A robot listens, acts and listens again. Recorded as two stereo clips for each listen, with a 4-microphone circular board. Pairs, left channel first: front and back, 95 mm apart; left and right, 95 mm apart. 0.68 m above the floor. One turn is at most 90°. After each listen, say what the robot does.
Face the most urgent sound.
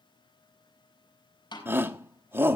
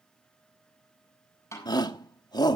Turn 90° left.
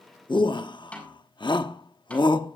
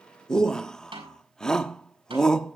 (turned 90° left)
Turn 10° left.
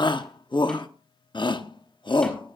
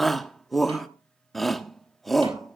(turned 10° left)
Facing the shout.